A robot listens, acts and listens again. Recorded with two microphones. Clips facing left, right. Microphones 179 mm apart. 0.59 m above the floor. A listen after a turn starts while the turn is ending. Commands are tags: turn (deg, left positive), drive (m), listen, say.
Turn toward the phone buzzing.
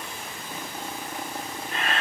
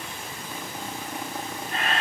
<listen/>
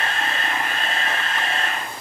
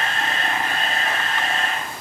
<listen/>
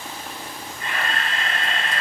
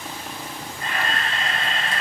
<say>I can't make out a phone buzzing, only a camera shutter.</say>